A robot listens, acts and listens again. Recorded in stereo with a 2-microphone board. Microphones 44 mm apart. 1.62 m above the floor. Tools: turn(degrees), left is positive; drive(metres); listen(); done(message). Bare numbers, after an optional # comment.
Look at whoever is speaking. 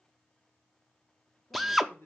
# The man speaking: about 50° left or 130° left.
turn(50)
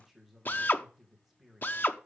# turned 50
done("Facing the man speaking, 2 to 4 m away.")